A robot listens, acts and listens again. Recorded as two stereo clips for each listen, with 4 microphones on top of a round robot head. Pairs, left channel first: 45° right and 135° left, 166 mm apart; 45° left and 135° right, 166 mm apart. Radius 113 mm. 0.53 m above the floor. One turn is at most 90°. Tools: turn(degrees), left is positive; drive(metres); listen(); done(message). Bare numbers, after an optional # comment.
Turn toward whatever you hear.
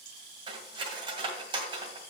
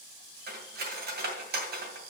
# The cutlery clinking: 165° right.
turn(-90)
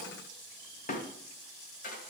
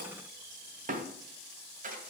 # The cutlery clinking is now 90° right.
turn(-90)
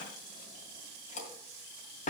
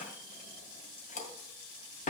done("Found it: cutlery clinking, straight ahead, 2 to 4 m away.")